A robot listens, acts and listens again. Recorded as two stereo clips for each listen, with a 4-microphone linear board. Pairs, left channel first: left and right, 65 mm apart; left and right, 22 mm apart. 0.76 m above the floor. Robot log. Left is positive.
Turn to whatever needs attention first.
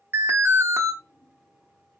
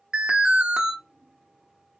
note: The alarm: about 50° right or 130° right.
cmd yaw -50
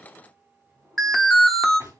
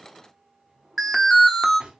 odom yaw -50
end: Facing the alarm, under 1 m away.